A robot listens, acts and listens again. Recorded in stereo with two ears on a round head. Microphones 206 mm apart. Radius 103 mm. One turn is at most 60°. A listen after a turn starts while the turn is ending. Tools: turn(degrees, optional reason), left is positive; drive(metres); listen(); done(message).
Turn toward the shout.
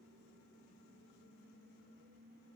listen()
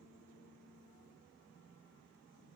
listen()
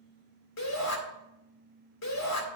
turn(degrees=60)
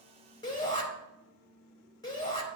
turn(degrees=20, reason="So it is at 20° left.")
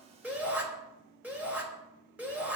done("Found it: a shout, straight ahead, 2 to 4 m away.")